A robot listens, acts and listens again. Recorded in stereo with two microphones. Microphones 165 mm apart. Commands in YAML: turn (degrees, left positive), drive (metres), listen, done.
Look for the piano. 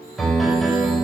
turn: 30
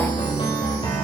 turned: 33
turn: 145
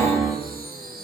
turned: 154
done: "Facing the piano."